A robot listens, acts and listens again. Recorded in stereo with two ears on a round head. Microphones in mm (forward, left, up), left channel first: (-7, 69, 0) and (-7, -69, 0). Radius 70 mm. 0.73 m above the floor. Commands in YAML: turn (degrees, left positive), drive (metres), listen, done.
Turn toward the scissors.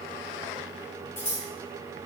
turn: 30
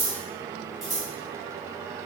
done: "Found it: scissors, straight ahead."